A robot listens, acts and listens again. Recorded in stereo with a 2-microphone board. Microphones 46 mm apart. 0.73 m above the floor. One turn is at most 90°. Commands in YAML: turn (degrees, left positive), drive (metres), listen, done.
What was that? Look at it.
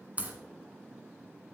turn: -30
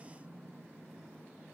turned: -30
listen: true
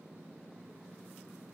done: "I heard a crack, but can't make it out now. It was about straight ahead or 120° right."